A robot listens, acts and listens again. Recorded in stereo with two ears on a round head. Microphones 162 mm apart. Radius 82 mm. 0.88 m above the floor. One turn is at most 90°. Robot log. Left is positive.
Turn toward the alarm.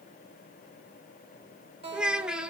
cmd idle
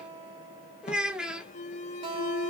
note: The alarm: about 40° left or 140° left.
cmd yaw +40
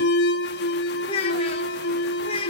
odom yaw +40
note: So it is at 95° left.
cmd yaw +90
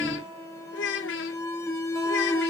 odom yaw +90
note: The alarm is now 15° left.
cmd yaw +15
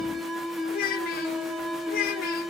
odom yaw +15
end: Found it: an alarm, straight ahead, under 1 m away.